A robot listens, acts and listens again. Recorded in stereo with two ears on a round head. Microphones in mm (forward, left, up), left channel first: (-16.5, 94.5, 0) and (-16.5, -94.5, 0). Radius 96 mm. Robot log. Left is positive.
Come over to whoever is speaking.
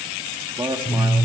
note: The man speaking: about 20° right or 160° right.
cmd yaw -20
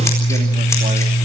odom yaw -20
cmd idle
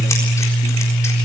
cmd idle
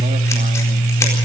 end: I heard a man speaking, but can't make it out now. It was about straight ahead or 140° right. I did not reach it.